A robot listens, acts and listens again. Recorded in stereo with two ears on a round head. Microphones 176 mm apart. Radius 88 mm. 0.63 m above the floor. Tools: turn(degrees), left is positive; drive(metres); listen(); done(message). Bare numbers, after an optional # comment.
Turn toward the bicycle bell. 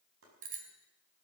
# The bicycle bell: about 40° right or 140° right.
turn(-40)
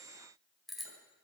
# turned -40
done("Facing the bicycle bell, 2 to 4 m away.")